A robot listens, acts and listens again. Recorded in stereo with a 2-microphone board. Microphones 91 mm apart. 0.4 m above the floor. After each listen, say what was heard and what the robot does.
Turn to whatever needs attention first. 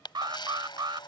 The alarm: about 60° right or 120° right. Turn 60° right.
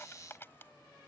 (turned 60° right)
Keep listening.
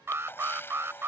So it is at 35° right. Turn 35° right.
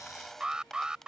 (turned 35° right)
The alarm is now 10° right. Turn 10° right.
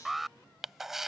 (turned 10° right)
Facing the alarm.